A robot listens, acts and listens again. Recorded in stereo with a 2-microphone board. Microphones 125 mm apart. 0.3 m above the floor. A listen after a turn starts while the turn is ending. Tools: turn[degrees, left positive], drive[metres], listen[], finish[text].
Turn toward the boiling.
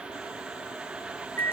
Action: listen[]
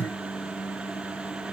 Action: listen[]
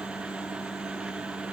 Action: finish[I can't make out boiling to turn to.]